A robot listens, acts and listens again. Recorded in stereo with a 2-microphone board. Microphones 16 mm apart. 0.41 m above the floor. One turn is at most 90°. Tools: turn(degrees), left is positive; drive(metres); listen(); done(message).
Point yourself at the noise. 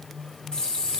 turn(degrees=70)
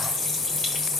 turn(degrees=25)
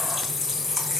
done("Facing the running tap.")